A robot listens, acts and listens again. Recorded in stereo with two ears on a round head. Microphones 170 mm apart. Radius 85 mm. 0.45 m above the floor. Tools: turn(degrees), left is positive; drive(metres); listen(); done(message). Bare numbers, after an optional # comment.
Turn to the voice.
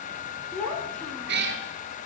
turn(30)
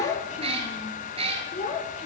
# So it is at 145° left.
turn(145)
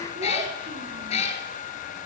listen()
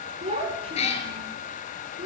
# The child speaking is now 35° right.
turn(-35)
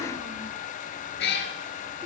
listen()
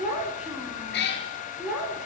done("Facing the child speaking.")